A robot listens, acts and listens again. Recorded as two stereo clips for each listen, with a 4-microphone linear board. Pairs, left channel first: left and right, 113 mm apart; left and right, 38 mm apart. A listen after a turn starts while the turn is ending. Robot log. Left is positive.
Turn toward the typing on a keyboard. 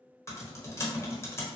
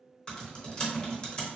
note: The typing on a keyboard: about 25° left or 155° left.
cmd yaw +25
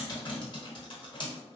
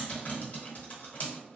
note: So it is at 135° left.
cmd yaw +135
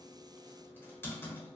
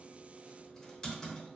note: The typing on a keyboard is now 20° left.
cmd yaw +20
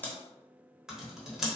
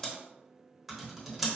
end: Facing the typing on a keyboard.